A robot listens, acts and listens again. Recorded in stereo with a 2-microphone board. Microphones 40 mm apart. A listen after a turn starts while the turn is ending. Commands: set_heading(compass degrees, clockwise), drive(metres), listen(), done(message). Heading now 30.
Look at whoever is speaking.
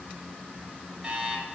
listen()
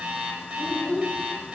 set_heading(0)
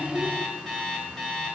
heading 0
listen()
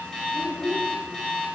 done("Facing the child speaking, 1 to 2 m away.")